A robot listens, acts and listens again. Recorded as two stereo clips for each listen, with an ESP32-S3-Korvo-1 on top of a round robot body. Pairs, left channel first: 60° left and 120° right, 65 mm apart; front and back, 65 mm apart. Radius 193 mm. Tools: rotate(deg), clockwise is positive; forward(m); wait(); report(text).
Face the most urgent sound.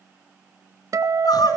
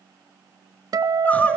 rotate(-70)
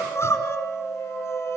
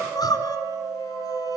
rotate(-15)
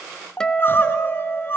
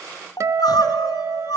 report("Found it: crying, straight ahead.")